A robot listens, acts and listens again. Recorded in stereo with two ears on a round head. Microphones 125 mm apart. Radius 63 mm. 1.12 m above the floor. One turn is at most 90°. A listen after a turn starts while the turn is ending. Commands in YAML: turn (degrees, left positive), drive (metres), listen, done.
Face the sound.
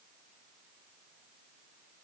listen: true
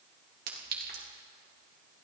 turn: -65
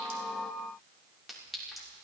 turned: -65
done: "Found it: a clink, straight ahead, 2 to 4 m away."